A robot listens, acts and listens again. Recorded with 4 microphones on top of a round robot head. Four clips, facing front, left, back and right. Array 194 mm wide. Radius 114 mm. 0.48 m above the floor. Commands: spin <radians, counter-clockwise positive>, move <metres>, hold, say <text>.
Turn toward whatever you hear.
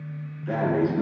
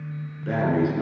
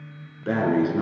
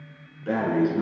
spin 3.14
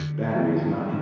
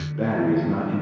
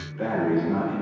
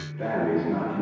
spin 0.87
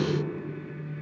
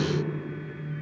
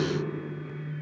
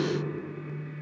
hold
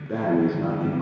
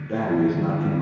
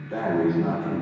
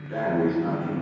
spin 0.44
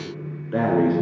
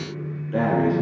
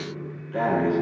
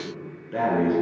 say Facing the breathing.